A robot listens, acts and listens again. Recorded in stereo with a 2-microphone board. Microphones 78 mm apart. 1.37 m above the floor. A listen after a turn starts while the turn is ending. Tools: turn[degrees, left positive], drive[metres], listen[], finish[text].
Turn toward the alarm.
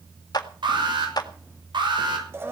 Action: turn[-90]
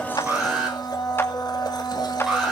Action: finish[Facing the alarm, over 4 m away.]